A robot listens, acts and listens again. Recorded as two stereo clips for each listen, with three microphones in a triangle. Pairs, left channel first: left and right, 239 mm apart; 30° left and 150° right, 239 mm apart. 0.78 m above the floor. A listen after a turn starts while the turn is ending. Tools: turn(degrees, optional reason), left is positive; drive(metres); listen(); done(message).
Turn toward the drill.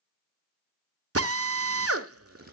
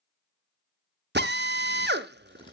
turn(degrees=-105, reason="The drill: 105° right.")
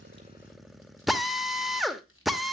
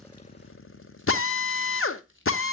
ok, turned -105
done("Facing the drill, under 1 m away.")